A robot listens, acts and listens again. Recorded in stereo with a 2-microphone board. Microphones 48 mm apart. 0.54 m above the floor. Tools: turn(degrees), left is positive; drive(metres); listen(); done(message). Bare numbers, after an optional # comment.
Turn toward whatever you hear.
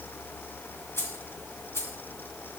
# The keys jangling: about 70° left or 110° left.
turn(70)
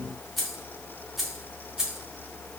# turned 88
# So it is at 10° right.
turn(-10)
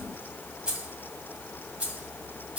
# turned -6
# The keys jangling is now 25° right.
turn(-25)
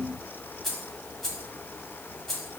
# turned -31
done("Found it: keys jangling, straight ahead, 2 to 4 m away.")